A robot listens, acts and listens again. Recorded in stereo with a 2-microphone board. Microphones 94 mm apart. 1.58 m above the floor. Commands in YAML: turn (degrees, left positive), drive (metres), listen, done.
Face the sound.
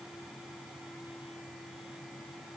listen: true
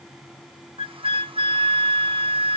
turn: -70
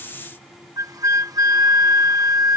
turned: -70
turn: -40
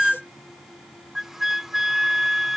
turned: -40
done: "Found it: a flute, straight ahead."